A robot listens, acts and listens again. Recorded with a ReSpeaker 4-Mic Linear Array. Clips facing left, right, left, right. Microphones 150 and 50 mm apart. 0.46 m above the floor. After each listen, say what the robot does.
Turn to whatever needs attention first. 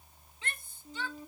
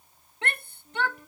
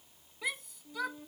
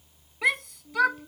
Turn 65° right.
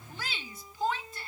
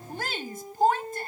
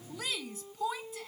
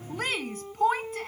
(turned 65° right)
Turn 50° right.
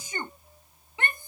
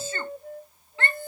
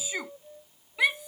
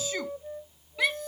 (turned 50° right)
Turn 15° left.
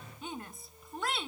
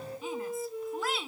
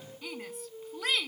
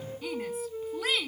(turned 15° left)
Found it: a shout, straight ahead.